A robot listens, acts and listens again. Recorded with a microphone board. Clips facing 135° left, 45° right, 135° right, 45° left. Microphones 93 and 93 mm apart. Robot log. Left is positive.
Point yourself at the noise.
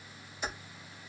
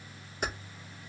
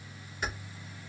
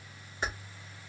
note: The keys jangling: 10° right.
cmd yaw -10
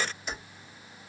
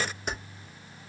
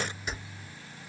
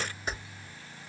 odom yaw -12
end: Found it: keys jangling, straight ahead, 2 to 4 m away.